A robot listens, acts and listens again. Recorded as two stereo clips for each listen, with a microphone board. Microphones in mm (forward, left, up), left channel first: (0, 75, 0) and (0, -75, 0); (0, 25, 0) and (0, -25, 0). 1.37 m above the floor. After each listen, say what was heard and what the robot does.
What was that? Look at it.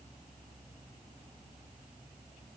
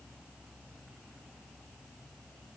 Keep listening.
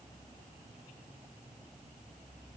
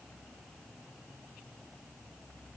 Keep listening.
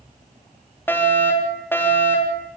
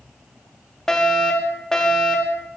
Turn 30° left.
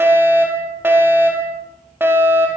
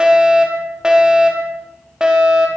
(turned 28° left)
So it is at 15° right. Turn 15° right.
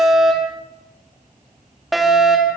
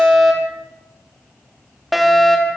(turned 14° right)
Facing the fire alarm.